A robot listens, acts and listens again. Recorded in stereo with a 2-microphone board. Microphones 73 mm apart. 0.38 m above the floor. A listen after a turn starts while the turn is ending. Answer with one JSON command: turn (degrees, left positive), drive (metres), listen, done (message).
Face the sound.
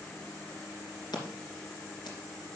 {"turn": 90}
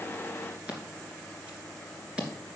{"turn": -15}
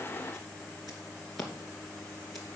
{"done": "Facing the scissors, 2 to 4 m away."}